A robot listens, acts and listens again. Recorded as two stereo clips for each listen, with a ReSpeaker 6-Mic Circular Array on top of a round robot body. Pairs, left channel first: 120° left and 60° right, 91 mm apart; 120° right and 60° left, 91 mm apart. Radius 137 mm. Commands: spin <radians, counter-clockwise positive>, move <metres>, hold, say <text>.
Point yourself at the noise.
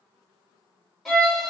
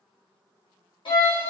spin -2.62
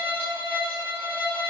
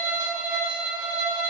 spin 0.17
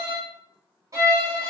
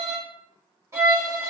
say Found it: a violin, straight ahead, 1 to 2 m away.